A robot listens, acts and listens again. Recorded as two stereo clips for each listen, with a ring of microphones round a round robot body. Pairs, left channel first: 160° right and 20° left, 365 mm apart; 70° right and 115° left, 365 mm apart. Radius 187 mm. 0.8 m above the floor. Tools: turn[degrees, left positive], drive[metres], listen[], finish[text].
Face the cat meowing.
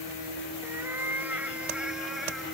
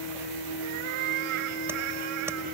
Thought: The cat meowing: 110° left.
Action: turn[110]
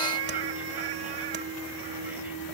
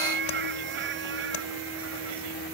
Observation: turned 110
Thought: The cat meowing is now 50° left.
Action: turn[50]
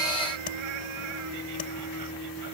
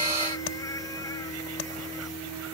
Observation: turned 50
Action: listen[]
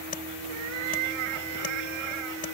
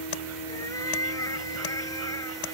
Thought: The cat meowing is now 15° left.
Action: turn[15]
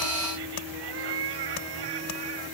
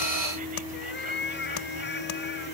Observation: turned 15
Action: finish[Facing the cat meowing.]